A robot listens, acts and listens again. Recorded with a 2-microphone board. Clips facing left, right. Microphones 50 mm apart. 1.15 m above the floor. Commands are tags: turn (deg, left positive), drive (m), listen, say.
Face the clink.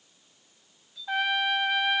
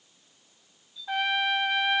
<turn deg="65"/>
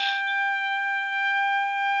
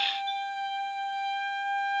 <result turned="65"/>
<listen/>
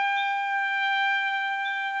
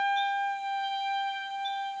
<listen/>
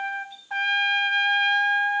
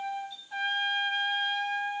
<say>I heard a clink, but can't make it out now. It was about straight ahead or 50° left.</say>